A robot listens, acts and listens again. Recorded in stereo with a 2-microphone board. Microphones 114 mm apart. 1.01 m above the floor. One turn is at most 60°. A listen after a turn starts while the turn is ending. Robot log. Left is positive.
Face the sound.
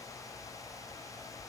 cmd idle
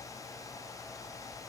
cmd idle
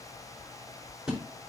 cmd yaw -30
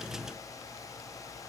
cmd idle
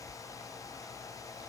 end: I heard a splash, but can't make it out now. It was about 25° left or 145° right.